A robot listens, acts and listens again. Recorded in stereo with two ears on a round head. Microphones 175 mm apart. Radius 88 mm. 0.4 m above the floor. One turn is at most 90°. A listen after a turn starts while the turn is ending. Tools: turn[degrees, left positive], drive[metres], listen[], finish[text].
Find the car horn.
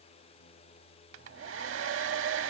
Action: listen[]
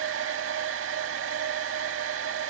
Action: listen[]
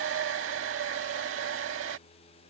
Action: finish[I can't make out a car horn, only a hair dryer.]